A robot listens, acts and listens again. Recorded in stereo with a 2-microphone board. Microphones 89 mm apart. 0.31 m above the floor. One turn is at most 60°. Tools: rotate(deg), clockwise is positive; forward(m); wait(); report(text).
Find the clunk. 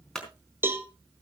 rotate(-30)
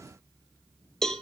wait()
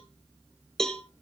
report("I heard a clunk, but can't make it out now. It was about 25° right or 145° left.")